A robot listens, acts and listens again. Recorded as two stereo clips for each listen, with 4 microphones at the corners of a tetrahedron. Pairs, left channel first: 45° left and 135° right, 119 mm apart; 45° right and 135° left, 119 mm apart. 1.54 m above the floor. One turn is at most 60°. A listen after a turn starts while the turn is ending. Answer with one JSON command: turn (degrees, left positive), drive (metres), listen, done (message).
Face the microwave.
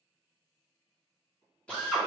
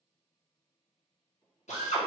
{"done": "Found it: a microwave, straight ahead."}